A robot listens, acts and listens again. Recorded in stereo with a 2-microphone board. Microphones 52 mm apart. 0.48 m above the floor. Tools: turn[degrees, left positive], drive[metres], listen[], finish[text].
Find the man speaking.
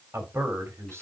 Thought: The man speaking: about 55° right or 125° right.
Action: turn[-55]
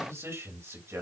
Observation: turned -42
Thought: So it is at 65° right.
Action: turn[-65]
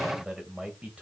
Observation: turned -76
Thought: The man speaking is now 20° right.
Action: turn[-20]
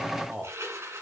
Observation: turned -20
Thought: The man speaking is now 10° right.
Action: turn[-10]
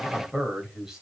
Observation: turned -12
Thought: The man speaking is now 10° right.
Action: turn[-10]
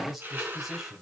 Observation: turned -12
Action: finish[Facing the man speaking, 2 to 4 m away.]